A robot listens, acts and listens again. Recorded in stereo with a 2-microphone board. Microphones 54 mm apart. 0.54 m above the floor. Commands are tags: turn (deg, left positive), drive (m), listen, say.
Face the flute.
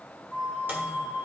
<turn deg="30"/>
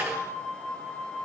<turn deg="145"/>
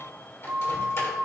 <turn deg="-35"/>
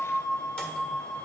<say>Facing the flute.</say>